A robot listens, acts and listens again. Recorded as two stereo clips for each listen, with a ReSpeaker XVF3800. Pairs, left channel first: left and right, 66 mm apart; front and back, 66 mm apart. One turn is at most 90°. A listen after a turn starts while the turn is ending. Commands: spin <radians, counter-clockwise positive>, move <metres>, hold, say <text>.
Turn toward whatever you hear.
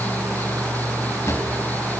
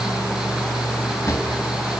spin 0.79
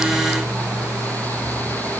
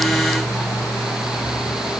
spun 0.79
hold
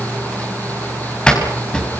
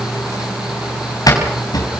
spin 0.26
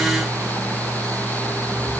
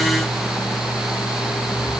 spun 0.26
hold
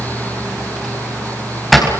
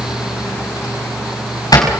say Found it: a drawer, straight ahead.